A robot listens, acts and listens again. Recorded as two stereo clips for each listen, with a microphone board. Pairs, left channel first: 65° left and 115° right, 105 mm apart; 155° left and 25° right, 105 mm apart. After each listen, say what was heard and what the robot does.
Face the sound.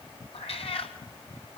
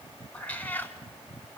The cat meowing: 85° left. Turn 85° left.
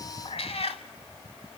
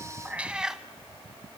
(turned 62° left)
The cat meowing is now 65° left. Turn 65° left.
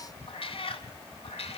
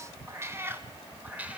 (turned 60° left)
The cat meowing is now 55° left. Turn 55° left.
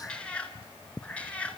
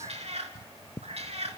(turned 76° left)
The cat meowing is now 10° right. Turn 10° right.
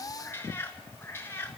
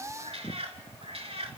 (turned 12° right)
Facing the cat meowing.